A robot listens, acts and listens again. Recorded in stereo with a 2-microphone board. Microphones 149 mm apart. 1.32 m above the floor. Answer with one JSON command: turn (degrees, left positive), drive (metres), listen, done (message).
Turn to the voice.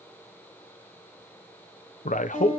{"turn": 60}
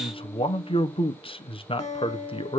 {"turn": 45}
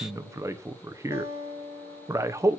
{"turn": -25}
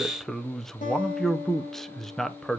{"done": "Found it: a man speaking, straight ahead."}